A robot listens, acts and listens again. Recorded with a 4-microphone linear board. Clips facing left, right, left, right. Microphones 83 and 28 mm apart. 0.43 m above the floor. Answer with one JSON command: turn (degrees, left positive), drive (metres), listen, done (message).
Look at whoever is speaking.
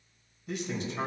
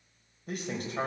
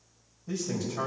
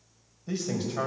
{"turn": -50}
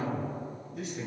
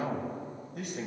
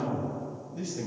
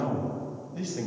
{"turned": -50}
{"turn": -70}
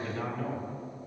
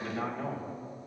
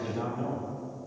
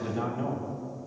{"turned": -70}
{"turn": -20}
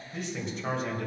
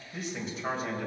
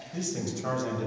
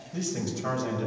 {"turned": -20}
{"done": "Facing the man speaking."}